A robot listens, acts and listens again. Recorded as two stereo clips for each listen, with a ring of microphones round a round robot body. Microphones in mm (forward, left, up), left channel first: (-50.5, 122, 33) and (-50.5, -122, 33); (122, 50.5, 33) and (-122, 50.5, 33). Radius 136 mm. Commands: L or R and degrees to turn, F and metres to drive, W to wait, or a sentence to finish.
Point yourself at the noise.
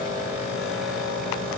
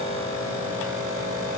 W
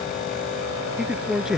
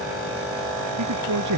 R175
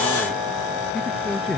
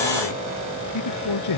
Found it: a man speaking, straight ahead.